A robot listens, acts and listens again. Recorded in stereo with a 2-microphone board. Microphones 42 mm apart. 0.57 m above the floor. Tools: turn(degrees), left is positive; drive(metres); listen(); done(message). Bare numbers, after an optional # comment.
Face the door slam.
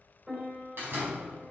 # The door slam: about 55° right or 125° right.
turn(-55)
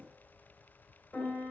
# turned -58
listen()
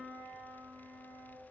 done("I heard a door slam, but can't make it out now. It was about 5° left or 70° right.")